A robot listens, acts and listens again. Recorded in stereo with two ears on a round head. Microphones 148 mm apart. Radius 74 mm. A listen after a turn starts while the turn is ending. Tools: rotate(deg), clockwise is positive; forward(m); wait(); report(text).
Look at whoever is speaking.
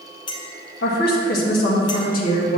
rotate(-55)
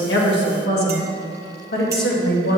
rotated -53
rotate(-65)
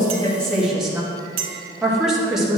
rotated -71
report("Found it: a woman speaking, straight ahead.")